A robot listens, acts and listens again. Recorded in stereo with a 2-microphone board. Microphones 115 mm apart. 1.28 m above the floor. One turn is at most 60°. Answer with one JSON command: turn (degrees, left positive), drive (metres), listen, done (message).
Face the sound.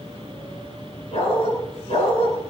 {"turn": 55}
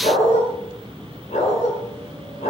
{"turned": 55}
{"turn": 60}
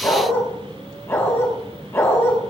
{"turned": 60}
{"turn": 20}
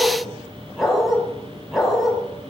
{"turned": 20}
{"done": "Found it: a dog barking, straight ahead."}